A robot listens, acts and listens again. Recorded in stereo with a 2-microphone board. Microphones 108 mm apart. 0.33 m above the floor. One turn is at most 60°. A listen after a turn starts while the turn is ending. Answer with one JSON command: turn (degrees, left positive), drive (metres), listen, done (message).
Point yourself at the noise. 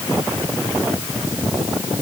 {"listen": true}
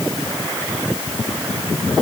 {"listen": true}
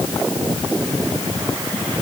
{"done": "I can't make out anything to turn to."}